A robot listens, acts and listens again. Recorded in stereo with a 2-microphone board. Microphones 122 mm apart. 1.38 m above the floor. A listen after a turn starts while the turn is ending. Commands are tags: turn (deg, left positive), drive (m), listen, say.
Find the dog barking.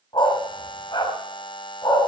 <turn deg="35"/>
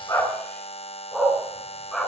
<say>Facing the dog barking.</say>